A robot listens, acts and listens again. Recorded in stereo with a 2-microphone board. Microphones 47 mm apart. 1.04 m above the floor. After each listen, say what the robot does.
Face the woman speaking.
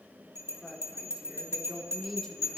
Turn 30° left.
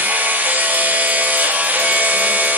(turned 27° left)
Keep listening.
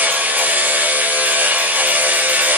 Keep listening.
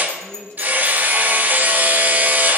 Turn 65° right.
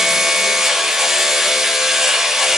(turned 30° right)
Turn 35° right.
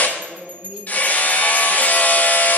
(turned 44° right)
Turn 10° left.
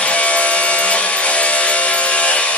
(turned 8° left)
Keep listening.
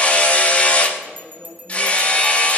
Found it: a woman speaking, straight ahead, 2 to 4 m away.